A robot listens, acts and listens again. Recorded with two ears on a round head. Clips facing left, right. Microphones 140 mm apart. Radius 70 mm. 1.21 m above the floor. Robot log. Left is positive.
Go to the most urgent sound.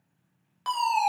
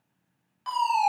note: The fire alarm: about 65° left or 115° left.
cmd yaw +65
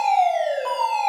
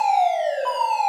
note: So it is at 10° left.
cmd yaw +10
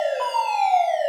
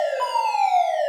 cmd fwd 1.0
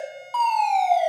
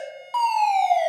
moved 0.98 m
cmd fwd 1.0
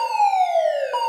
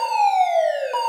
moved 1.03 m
note: The fire alarm is now 10° right.
cmd yaw -10
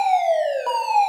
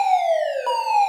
cmd fwd 1.0
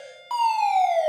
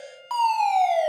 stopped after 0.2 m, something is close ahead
end: I am next to the fire alarm.